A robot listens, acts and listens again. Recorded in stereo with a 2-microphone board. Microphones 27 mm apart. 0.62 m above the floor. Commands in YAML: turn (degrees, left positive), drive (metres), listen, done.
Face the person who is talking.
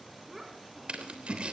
turn: -30
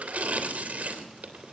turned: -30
listen: true
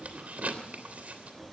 listen: true
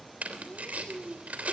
turn: -130
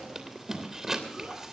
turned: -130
turn: -45
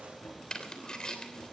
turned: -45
listen: true
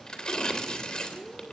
done: "Facing the child speaking."